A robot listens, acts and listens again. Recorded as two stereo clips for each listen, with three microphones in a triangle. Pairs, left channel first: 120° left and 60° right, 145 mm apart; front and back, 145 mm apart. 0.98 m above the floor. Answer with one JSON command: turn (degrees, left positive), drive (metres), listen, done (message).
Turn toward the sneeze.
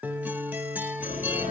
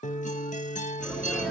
{"turn": 100}
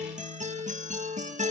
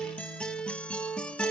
{"done": "I heard a sneeze from this way, but can't make it out now."}